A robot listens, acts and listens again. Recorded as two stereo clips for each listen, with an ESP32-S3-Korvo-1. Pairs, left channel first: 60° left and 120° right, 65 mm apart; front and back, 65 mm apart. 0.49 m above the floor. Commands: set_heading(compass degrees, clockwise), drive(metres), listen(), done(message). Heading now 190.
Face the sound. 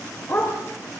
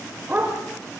set_heading(70)
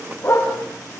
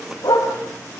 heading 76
set_heading(66)
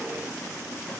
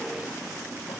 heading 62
listen()
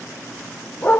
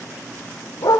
done("Found it: a dog barking, straight ahead, over 4 m away.")